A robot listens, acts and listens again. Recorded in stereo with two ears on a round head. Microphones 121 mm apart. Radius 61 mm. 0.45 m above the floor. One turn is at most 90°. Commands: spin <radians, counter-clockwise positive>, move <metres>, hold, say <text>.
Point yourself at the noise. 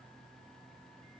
hold
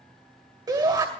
spin -0.52
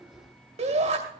spin -1.57
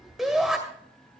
say Facing the shout.